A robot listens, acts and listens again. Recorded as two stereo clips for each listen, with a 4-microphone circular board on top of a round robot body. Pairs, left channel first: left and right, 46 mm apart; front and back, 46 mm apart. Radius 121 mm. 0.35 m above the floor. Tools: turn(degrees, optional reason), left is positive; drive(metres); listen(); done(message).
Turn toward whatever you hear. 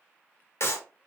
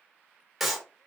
turn(degrees=95, reason="The clap: 95° left.")
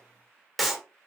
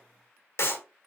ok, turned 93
done("Found it: a clap, straight ahead, 2 to 4 m away.")